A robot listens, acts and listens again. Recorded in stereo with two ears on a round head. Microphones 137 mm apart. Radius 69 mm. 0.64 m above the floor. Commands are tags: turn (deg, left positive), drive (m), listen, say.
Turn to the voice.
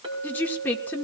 <turn deg="30"/>
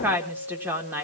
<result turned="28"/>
<turn deg="-15"/>
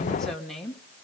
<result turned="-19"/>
<say>Found it: a woman speaking, straight ahead.</say>